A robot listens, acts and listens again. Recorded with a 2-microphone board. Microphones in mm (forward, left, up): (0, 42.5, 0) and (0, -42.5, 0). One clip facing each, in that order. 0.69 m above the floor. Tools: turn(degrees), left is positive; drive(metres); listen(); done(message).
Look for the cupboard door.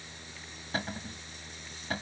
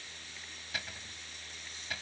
turn(degrees=40)
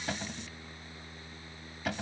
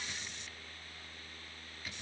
turn(degrees=100)
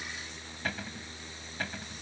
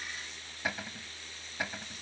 turn(degrees=-10)
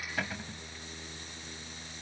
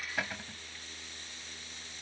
done("Facing the cupboard door.")